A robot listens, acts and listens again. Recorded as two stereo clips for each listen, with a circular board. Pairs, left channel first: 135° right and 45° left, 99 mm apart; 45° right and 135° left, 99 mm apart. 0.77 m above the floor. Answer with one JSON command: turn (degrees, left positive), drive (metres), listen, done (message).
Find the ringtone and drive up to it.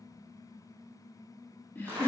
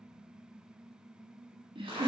{"listen": true}
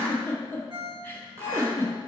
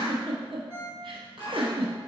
{"turn": 70}
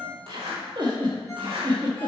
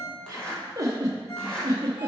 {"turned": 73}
{"drive": 1.0}
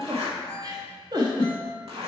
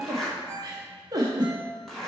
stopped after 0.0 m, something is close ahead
{"done": "Blocked. The ringtone is further on, straight ahead."}